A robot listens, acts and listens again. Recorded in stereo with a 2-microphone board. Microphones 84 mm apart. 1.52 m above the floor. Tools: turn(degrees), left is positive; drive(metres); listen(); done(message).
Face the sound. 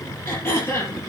turn(degrees=30)
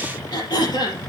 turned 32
turn(degrees=120)
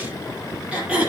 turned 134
turn(degrees=-15)
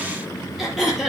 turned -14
done("Found it: throat clearing, straight ahead, over 4 m away.")